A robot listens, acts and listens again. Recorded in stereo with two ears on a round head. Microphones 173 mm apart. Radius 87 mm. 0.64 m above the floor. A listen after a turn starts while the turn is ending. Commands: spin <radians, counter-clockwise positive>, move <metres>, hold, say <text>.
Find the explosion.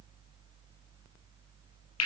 hold
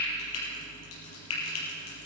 hold
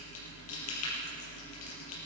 say I can't make out an explosion to turn to.